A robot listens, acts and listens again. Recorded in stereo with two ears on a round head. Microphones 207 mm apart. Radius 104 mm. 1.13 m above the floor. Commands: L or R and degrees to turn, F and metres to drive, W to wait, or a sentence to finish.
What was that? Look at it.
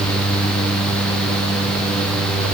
W
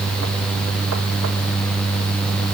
W
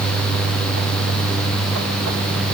I can't make out anything.